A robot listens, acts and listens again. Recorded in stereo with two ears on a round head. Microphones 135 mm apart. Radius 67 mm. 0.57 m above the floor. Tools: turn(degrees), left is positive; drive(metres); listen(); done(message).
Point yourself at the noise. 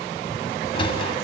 turn(degrees=40)
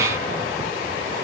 listen()
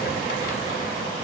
listen()
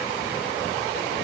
done("I heard a sliding door, but can't make it out now. It was about straight ahead or 100° left.")